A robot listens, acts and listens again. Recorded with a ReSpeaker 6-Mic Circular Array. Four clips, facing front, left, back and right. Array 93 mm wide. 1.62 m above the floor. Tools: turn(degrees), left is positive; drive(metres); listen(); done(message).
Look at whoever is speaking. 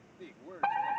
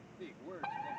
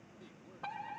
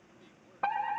turn(degrees=45)
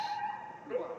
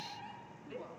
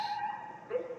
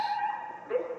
listen()
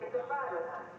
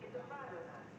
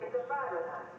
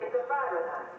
listen()
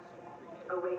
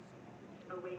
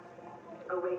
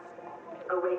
done("Facing where the man speaking came from. I can't hear it now.")